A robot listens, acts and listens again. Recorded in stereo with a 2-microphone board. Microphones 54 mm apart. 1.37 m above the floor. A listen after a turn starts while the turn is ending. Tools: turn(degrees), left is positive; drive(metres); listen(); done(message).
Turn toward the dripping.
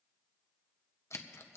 listen()
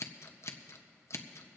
listen()
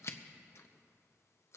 done("I can't make out dripping to turn to.")